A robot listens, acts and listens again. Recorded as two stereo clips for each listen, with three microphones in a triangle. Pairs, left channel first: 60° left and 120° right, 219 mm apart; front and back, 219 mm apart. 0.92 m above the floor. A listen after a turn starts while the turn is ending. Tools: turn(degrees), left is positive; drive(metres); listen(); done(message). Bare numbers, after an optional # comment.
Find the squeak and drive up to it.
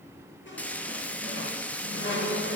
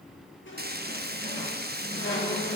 # The squeak: 30° left.
turn(30)
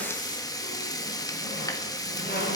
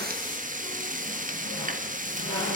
# The squeak is now 20° left.
turn(20)
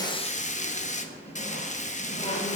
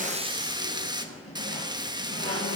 drive(1.0)
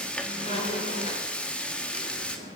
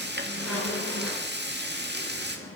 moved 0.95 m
drive(1.0)
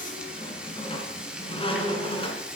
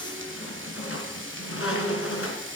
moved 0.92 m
drive(1.0)
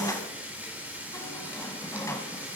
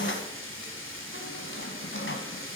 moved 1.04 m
# The squeak is now 15° right.
turn(-15)
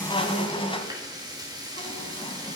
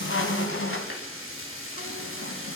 drive(1.0)
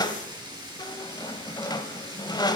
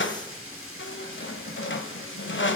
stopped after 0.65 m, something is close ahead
# The squeak is now 10° right.
turn(-10)
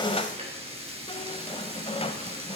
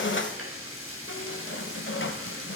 done("I am next to the squeak.")